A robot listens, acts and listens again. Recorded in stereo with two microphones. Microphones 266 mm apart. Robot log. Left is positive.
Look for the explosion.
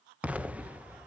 cmd yaw -30
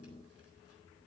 cmd idle
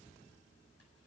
end: I heard an explosion, but can't make it out now. It was about 25° left or 145° right.